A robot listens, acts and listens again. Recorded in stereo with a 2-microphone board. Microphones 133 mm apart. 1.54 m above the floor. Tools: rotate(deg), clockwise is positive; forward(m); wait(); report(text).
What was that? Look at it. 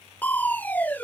rotate(-30)
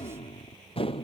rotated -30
rotate(-135)
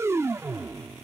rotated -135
rotate(20)
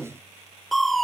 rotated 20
report("Found it: crushing, straight ahead.")